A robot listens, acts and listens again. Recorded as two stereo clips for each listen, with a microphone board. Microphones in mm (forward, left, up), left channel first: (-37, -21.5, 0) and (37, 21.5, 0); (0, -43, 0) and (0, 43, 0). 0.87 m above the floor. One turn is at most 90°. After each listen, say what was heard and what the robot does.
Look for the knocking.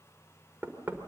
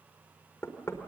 The knocking: 40° right. Turn 40° right.
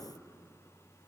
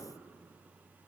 Keep listening.
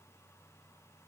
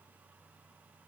Keep listening.
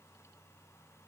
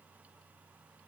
Facing where the knocking came from. I can't hear it now.